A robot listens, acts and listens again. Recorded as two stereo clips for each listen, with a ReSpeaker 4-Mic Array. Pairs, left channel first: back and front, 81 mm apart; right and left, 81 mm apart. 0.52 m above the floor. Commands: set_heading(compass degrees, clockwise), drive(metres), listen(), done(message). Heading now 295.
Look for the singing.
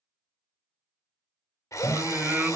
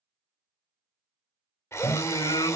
set_heading(10)
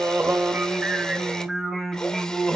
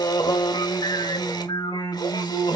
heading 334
set_heading(69)
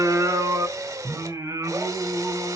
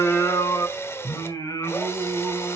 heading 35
set_heading(80)
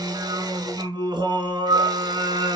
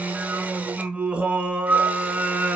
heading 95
set_heading(80)
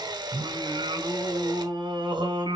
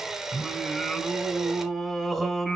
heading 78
done("Found it: singing, straight ahead.")